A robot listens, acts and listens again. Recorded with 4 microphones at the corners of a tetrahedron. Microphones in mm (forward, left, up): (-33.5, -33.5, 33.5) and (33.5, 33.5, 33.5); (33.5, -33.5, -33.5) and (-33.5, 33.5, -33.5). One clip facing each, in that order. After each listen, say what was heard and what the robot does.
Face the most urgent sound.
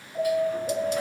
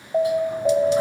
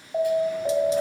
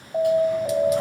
The alarm: 45° left. Turn 45° left.
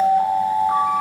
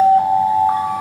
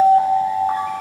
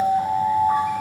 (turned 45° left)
Facing the alarm.